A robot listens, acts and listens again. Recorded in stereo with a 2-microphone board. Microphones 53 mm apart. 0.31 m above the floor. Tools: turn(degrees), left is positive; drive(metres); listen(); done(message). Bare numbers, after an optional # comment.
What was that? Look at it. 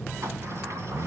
listen()
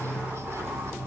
listen()
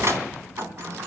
# The sliding door: about 60° right or 120° right.
turn(-60)
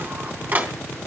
# So it is at 45° right.
turn(-45)
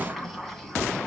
done("Facing the sliding door.")